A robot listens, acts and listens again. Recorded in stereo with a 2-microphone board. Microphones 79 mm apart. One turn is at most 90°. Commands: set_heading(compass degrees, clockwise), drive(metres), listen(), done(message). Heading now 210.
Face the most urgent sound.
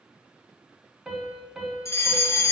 set_heading(170)
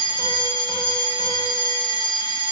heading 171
set_heading(81)
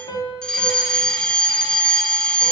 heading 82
set_heading(72)
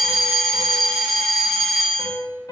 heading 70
done("Facing the fire alarm, 1 to 2 m away.")